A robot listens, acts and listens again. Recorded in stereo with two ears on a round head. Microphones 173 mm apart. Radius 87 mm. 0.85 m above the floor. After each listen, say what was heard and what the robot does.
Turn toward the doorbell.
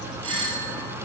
The doorbell: about 30° right or 150° right. Turn 30° right.
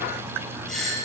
Facing the doorbell, over 4 m away.